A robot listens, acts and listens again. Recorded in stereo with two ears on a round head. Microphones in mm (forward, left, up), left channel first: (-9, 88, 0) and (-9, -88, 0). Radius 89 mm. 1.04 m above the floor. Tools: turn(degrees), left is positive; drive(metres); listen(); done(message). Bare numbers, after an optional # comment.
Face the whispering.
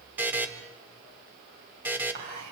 # The whispering: about 55° right or 125° right.
turn(-55)
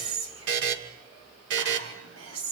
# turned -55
# So it is at 70° right.
turn(-70)
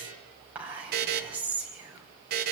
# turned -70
# The whispering is now 10° right.
turn(-10)
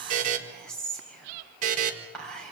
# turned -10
done("Found it: whispering, straight ahead, over 4 m away.")